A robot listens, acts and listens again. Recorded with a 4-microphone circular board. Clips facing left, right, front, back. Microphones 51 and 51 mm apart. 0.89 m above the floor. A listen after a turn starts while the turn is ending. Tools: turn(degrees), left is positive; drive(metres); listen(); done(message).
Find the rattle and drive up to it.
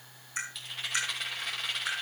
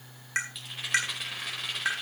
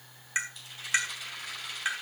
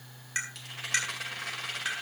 turn(degrees=-175)
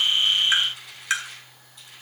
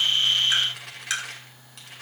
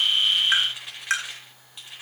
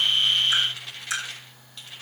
turn(degrees=-75)
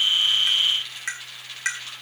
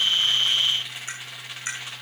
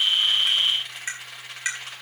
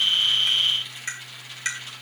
turn(degrees=-20)
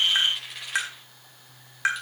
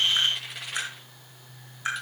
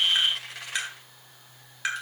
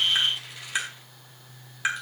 drive(metres=1.0)
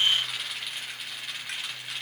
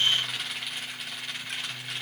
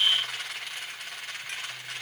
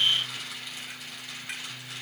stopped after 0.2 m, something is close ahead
done("Something is in my way. I am facing the rattle but have not reached it.")